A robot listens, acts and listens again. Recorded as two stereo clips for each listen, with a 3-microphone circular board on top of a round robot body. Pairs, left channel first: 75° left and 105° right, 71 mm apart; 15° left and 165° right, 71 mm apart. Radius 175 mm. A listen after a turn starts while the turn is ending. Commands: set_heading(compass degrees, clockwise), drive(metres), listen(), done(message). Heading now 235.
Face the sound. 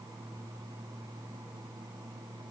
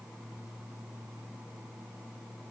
listen()
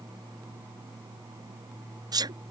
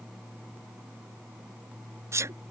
set_heading(355)
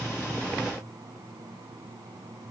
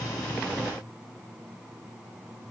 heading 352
done("Facing where the sneeze came from. I can't hear it now.")